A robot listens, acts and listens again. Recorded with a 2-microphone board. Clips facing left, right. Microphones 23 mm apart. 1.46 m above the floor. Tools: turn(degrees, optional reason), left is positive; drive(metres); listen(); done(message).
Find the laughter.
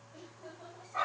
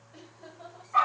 turn(degrees=-40, reason="The laughter: about 40° right or 140° right.")
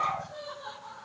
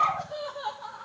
turn(degrees=-100, reason="So it is at 100° right.")
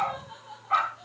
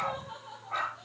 done("Found it: laughter, straight ahead, over 4 m away.")